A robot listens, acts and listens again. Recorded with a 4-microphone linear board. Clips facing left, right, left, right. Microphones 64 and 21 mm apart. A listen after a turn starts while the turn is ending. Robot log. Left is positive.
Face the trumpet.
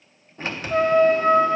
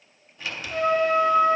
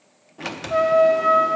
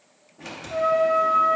note: The trumpet: about 45° left or 135° left.
cmd yaw +45
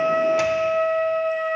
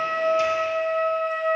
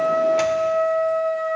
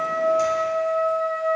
end: Found it: a trumpet, straight ahead.